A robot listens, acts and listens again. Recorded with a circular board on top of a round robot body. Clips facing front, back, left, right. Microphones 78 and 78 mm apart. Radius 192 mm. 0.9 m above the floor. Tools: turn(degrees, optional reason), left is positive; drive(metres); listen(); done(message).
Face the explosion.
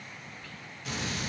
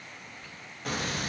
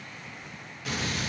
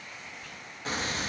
turn(degrees=-145, reason="The explosion: 145° right.")
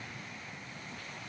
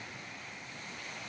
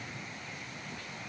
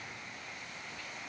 done("Facing where the explosion came from. I can't hear it now.")